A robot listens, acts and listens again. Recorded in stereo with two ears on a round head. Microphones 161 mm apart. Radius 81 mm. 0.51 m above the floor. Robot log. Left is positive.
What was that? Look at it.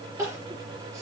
note: The crying: about 20° right or 160° right.
cmd yaw -20
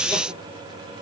cmd idle
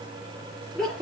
end: Facing the crying, over 4 m away.